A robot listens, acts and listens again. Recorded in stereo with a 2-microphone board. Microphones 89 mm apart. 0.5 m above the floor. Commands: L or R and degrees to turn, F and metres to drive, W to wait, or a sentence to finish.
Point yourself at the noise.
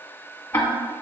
L25
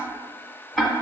Facing the ticking, under 1 m away.